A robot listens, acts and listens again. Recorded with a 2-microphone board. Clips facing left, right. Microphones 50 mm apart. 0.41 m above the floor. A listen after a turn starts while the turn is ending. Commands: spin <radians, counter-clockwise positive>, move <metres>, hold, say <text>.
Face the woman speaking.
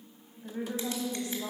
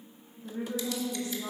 spin 1.22
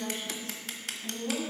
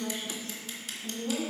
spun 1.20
spin 0.17
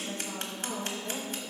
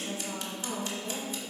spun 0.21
spin -0.17
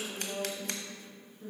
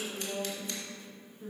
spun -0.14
spin -0.17
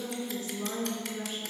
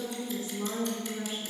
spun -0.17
say Found it: a woman speaking, straight ahead.